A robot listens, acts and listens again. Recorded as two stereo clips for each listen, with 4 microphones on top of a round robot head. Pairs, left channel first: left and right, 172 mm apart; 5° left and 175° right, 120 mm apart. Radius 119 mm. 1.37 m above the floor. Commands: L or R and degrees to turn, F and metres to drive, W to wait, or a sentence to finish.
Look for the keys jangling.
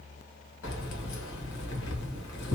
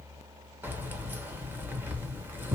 L110
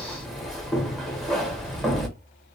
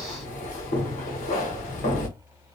Facing the keys jangling, under 1 m away.